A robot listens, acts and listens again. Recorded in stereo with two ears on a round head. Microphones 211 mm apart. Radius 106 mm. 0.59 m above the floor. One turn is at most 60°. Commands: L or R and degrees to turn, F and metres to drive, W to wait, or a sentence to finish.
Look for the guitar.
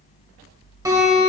R30
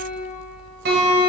R60
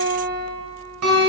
R60
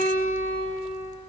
R60
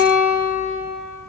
R40
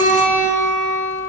Facing the guitar, 1 to 2 m away.